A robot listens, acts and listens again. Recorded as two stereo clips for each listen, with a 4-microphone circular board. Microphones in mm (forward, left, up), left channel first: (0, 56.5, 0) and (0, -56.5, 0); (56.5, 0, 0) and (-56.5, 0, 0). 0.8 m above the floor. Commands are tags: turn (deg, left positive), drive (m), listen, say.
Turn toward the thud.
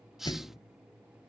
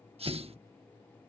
<turn deg="140"/>
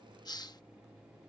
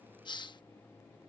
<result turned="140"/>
<say>Facing where the thud came from. I can't hear it now.</say>